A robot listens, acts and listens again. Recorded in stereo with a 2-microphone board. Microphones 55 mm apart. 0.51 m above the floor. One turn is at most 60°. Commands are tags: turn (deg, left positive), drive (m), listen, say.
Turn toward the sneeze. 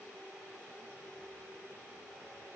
<listen/>
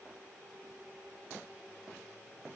<listen/>
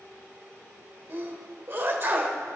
<turn deg="-40"/>
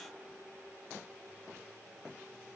<listen/>
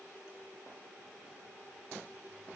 <say>I heard a sneeze, but can't make it out now. It was about straight ahead or 100° right.</say>